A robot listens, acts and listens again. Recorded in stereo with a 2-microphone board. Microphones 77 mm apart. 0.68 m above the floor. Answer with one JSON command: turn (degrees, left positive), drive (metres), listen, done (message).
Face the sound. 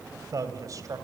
{"turn": -50}
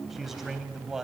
{"done": "Found it: a man speaking, straight ahead, 2 to 4 m away."}